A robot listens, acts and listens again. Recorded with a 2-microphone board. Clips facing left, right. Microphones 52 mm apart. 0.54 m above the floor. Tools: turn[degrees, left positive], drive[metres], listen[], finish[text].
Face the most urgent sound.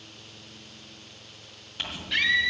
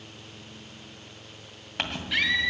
Action: turn[-30]
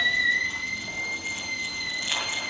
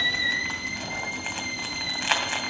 Thought: So it is at 25° left.
Action: turn[25]
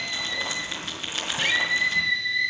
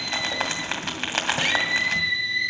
Action: finish[Facing the scream.]